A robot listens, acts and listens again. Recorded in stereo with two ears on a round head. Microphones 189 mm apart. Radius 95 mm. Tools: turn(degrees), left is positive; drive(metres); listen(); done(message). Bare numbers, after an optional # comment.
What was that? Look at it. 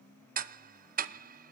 # The ticking: about 45° right or 135° right.
turn(-45)
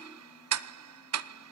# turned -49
# So it is at 90° right.
turn(-90)
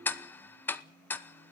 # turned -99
# The ticking is now 10° left.
turn(10)
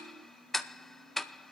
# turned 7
done("Found it: ticking, straight ahead.")